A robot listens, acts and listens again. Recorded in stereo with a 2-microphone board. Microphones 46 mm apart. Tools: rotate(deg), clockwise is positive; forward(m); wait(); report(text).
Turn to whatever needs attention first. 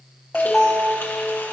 rotate(-30)
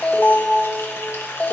rotate(-140)
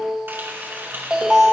rotate(15)
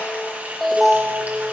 report("Found it: an alarm, straight ahead.")